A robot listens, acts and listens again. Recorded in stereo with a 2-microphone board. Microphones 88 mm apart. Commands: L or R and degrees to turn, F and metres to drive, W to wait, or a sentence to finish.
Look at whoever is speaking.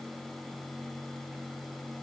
W
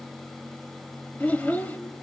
L20
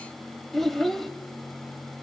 Found it: a child speaking, straight ahead.